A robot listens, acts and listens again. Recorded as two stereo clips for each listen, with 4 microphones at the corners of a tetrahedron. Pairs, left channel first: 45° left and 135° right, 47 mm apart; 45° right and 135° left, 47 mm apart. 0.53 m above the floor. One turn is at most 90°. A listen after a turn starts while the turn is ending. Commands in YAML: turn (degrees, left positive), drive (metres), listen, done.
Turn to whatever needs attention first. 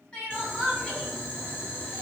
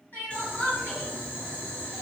turn: -20
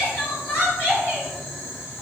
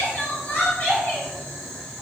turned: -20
done: "Found it: crying, straight ahead."